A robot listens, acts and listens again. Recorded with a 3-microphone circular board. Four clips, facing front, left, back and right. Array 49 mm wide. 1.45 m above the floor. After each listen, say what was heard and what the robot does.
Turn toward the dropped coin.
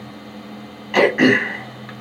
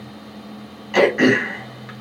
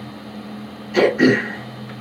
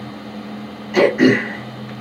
Keep listening.
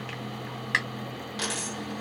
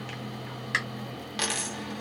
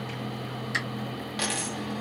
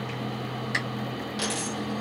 The dropped coin: 105° left. Turn 105° left.
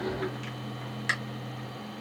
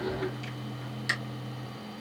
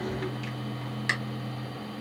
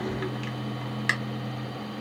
I heard a dropped coin from this way, but can't make it out now.